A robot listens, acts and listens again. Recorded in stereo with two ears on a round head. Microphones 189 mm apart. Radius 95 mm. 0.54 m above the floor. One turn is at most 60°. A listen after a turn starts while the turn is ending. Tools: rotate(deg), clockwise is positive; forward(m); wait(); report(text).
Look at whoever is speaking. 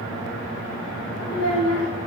rotate(-60)
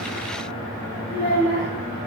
rotate(-30)
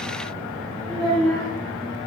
report("Facing the child speaking, 2 to 4 m away.")